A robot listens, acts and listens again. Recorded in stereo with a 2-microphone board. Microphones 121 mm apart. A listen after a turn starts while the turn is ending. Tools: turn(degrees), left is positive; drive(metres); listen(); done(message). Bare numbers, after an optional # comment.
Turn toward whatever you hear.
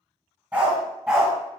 turn(-30)
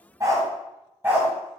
# The dog barking: about 15° right or 165° right.
turn(-15)
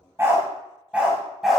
turn(30)
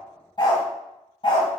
# So it is at 130° left.
turn(130)
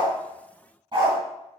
# The dog barking is now 40° right.
turn(-40)
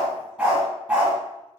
# The dog barking is now 15° right.
turn(-15)
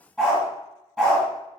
done("Found it: a dog barking, straight ahead.")